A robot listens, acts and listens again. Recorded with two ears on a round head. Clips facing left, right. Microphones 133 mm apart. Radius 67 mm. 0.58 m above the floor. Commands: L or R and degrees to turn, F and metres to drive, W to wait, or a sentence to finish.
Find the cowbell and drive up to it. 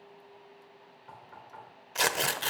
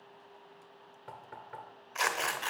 W
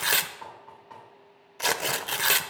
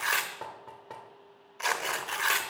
W
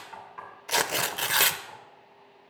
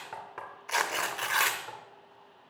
I can't make out a cowbell, only tearing paper and knocking.